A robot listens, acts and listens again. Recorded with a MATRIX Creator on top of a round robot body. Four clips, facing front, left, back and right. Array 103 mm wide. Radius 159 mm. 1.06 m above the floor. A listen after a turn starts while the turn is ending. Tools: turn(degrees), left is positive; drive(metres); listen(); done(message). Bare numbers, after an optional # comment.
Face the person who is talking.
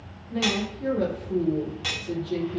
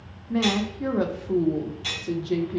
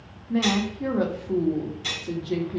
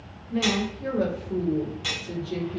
# The woman speaking: 125° left.
turn(125)
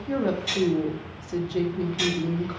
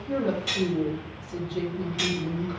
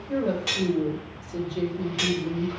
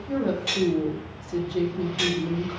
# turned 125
# The woman speaking is now 20° right.
turn(-20)
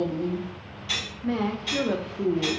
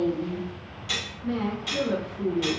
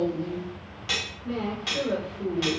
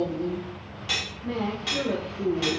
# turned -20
done("Facing the woman speaking.")